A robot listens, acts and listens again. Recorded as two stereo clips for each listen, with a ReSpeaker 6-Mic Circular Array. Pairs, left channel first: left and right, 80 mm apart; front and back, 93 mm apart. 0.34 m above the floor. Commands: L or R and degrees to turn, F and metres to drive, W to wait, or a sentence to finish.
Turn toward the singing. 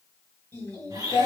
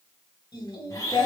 L35
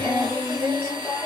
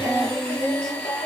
L20
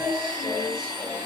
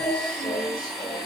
L20
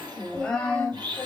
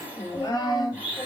L20
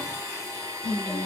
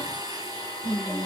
L20
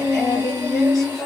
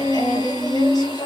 Found it: singing, straight ahead, 1 to 2 m away.